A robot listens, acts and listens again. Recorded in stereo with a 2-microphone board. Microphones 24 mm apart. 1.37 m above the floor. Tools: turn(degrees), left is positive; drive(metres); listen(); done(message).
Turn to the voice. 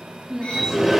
turn(degrees=-15)
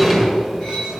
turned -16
listen()
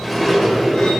listen()
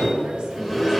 done("I heard a woman speaking, but can't make it out now. It was about straight ahead or 145° right.")